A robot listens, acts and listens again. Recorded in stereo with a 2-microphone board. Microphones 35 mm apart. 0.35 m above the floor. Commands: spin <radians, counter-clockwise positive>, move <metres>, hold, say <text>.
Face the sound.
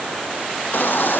spin 1.13
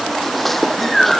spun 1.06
say Facing the baby crying.